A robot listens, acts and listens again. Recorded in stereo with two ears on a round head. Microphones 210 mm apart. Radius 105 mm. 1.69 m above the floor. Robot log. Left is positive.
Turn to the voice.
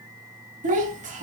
note: The child speaking: about 35° right or 145° right.
cmd yaw -35
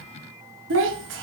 note: So it is at 105° right.
cmd yaw -105
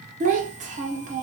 note: The child speaking is now 40° right.
cmd yaw -40
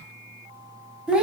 end: Facing the child speaking.